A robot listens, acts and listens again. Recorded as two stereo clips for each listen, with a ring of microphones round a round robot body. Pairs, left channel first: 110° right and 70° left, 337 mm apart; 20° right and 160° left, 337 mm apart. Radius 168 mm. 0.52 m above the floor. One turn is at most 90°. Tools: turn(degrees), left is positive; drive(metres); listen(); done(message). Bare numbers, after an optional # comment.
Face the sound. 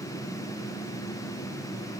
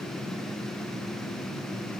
listen()
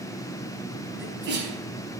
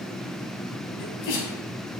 # The sneeze: 10° left.
turn(10)
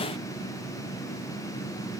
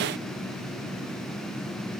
done("Facing where the sneeze came from. I can't hear it now.")